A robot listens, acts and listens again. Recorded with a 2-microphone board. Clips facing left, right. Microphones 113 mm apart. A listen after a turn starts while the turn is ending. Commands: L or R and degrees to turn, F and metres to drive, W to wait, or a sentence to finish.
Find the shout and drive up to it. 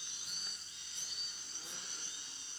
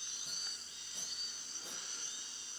W
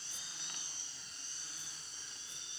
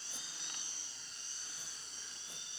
W
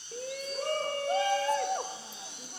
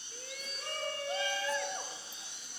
L40
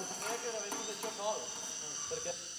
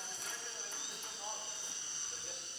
L95
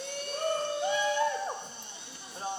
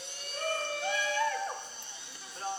L25
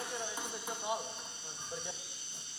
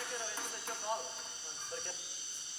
L15
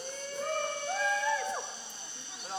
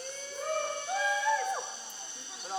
F1.0
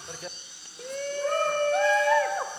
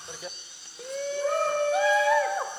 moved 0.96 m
F1.0
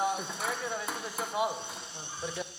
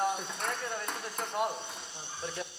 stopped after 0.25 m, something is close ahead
Arrived at the shout, straight ahead.